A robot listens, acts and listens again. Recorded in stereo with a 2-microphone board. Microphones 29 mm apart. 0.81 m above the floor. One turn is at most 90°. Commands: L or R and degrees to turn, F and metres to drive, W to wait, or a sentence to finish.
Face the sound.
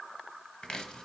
L30
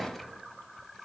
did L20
W
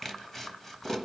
L15
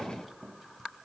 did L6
Found it: chopping, straight ahead.